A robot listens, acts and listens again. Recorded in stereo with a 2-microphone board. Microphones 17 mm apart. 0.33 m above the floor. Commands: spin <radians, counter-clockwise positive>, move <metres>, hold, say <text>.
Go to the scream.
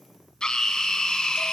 spin 0.70
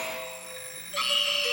spin 0.17
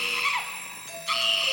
move 1.0
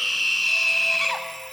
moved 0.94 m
move 1.0
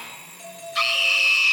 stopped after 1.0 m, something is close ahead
say Arrived at the scream, straight ahead.